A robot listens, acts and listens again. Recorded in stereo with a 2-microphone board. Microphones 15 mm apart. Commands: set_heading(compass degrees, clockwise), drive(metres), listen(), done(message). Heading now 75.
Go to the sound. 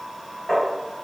set_heading(35)
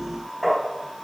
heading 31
drive(1.0)
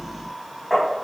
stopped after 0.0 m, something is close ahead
done("Blocked. The tapping is further on, straight ahead.")